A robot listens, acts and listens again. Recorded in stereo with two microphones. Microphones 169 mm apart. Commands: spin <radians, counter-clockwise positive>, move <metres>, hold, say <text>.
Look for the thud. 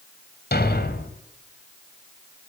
spin 1.31
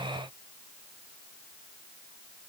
hold
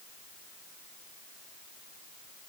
say I heard a thud, but can't make it out now. It was about straight ahead or 30° left.